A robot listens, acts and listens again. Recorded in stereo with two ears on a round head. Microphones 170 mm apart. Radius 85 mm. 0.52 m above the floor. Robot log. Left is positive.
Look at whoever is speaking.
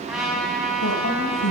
note: The woman speaking: about 70° left or 110° left.
cmd yaw +70
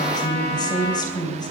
note: So it is at 25° left.
cmd yaw +25
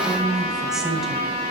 end: Found it: a woman speaking, straight ahead, 2 to 4 m away.